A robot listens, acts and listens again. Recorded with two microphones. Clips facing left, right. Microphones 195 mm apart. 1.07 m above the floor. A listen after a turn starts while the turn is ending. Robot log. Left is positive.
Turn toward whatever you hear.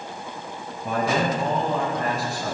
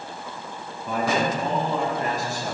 note: The man speaking: about 65° left or 115° left.
cmd yaw +65
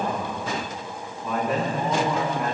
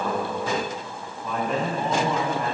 end: Found it: a man speaking, straight ahead.